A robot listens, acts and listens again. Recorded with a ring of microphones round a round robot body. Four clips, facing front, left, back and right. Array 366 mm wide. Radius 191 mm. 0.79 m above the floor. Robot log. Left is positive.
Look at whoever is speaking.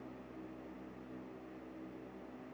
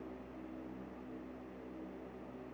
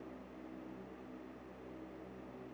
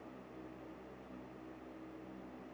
cmd idle
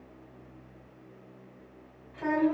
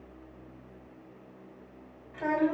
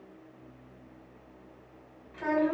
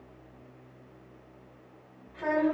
note: The child speaking: 100° left.
cmd yaw +100
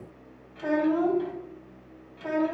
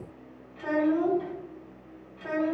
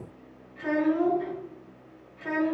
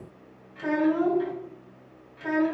note: The child speaking is now 25° right.
cmd yaw -25
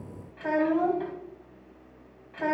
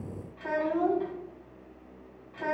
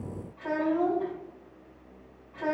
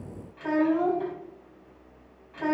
end: Facing the child speaking.